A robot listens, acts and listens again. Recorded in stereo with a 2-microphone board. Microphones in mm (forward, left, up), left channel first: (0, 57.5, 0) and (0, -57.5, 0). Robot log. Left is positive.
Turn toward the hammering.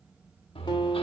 note: The hammering: about 55° left or 125° left.
cmd yaw +55
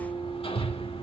note: So it is at 65° left.
cmd yaw +65
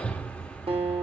note: The hammering is now 10° left.
cmd yaw +10
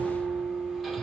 cmd idle
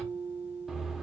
end: Facing the hammering, 1 to 2 m away.